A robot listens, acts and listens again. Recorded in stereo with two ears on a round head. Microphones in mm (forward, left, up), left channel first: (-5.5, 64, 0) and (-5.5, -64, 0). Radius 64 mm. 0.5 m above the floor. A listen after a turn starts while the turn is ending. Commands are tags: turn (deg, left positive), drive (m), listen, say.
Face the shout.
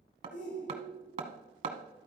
<turn deg="65"/>
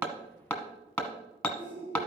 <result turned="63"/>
<turn deg="40"/>
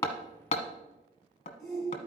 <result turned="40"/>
<say>Facing the shout, 1 to 2 m away.</say>